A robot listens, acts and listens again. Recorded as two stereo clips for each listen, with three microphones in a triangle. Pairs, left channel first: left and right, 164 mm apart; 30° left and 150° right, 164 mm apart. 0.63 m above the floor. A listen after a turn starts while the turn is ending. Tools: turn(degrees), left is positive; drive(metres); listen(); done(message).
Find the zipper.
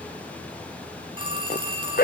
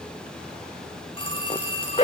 turn(degrees=75)
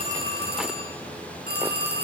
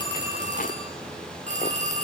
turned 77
listen()
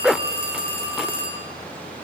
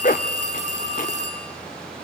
done("Found it: a zipper, straight ahead, 1 to 2 m away.")